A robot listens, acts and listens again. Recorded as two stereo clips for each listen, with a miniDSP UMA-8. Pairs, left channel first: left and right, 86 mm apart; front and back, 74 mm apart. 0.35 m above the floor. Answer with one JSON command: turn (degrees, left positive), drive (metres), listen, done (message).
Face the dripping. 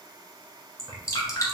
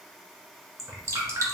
{"turn": 140}
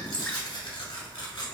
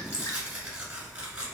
{"listen": true}
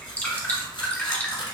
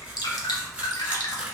{"turn": 20}
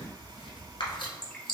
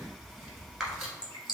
{"done": "Facing the dripping."}